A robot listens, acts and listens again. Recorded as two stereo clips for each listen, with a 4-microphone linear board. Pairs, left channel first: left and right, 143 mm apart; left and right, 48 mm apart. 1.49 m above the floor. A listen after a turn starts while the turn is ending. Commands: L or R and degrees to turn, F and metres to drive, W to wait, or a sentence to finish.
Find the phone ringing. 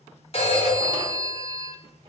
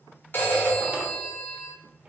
L45
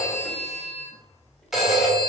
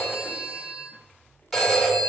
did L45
Found it: a phone ringing, straight ahead, 1 to 2 m away.